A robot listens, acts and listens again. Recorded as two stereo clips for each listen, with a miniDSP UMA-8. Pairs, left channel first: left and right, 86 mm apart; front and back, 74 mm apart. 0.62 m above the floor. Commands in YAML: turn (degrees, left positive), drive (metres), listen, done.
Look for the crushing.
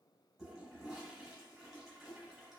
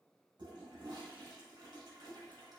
listen: true
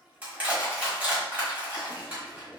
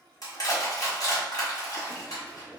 turn: -20
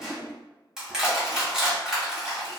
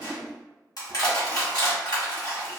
done: "Facing the crushing."